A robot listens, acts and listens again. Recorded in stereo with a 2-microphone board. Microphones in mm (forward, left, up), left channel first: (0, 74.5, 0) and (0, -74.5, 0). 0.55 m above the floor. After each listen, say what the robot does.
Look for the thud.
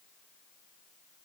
Keep listening.
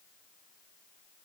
Keep listening.
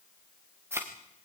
Turn 15° right.
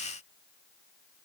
Keep listening.
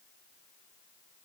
I heard a thud, but can't make it out now. It was about straight ahead or 150° right.